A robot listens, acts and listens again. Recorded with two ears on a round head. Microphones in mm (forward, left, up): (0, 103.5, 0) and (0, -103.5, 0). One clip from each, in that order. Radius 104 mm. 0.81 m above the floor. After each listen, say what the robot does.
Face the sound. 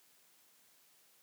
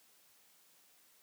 Keep listening.
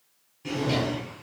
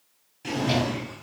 Turn 40° right.
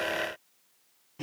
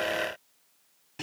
Turn 100° right.
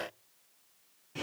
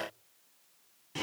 Turn 30° right.
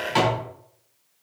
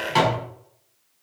Facing the drawer.